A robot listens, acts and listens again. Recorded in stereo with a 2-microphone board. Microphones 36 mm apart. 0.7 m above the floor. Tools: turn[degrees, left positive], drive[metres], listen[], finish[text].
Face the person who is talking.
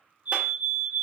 Action: listen[]
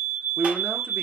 Thought: The man speaking: about 60° right or 120° right.
Action: turn[-60]
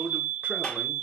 Thought: So it is at 50° right.
Action: turn[-50]
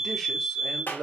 Action: finish[Found it: a man speaking, straight ahead, 1 to 2 m away.]